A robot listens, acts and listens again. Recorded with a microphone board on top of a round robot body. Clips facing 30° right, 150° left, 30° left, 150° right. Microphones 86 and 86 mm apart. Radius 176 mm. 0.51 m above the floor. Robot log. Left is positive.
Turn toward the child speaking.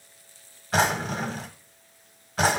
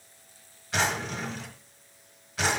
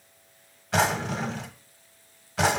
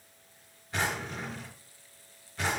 cmd idle
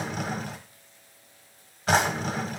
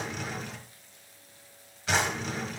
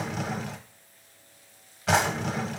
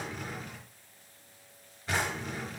cmd idle
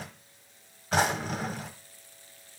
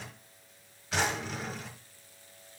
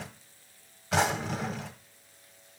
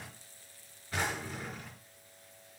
end: I can't make out a child speaking, only a drawer.